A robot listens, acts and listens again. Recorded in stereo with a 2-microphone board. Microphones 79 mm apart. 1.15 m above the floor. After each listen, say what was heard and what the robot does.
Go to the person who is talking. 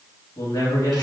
The man speaking: about 55° left or 125° left. Turn 55° left.
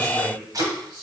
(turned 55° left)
Keep listening.
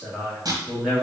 Drive 1.0 m forward.
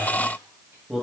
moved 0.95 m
Drive 1.0 m forward.
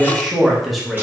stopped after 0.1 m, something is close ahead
I am next to the man speaking.